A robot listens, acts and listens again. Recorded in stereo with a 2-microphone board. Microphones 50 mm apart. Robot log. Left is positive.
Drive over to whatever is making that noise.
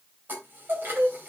note: The chime: about 40° right or 140° right.
cmd yaw -40
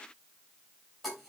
cmd fwd 1.0
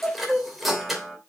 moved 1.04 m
cmd fwd 1.0
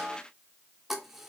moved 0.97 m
cmd fwd 1.0
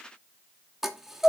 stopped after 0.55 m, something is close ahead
note: The chime is now 10° right.
cmd yaw -10
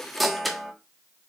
end: I am next to the chime.